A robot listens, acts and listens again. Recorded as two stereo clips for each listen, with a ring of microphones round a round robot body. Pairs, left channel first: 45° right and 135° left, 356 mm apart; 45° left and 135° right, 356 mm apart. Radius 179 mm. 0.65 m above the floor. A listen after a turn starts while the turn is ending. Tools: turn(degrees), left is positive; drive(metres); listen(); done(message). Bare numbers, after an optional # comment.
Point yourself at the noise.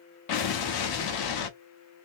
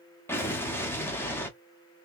# The explosion: 40° right.
turn(-40)
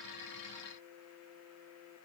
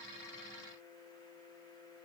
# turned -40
done("Facing where the explosion came from. I can't hear it now.")